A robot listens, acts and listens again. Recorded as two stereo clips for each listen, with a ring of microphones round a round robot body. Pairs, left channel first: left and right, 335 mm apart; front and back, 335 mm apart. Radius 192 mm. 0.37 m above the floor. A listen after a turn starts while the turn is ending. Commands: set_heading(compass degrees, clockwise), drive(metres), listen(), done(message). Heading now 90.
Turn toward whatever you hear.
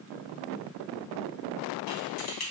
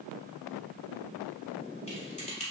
set_heading(20)
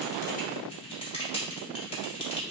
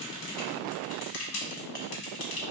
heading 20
set_heading(5)
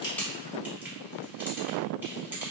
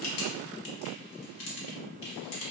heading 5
done("Facing the typing on a keyboard.")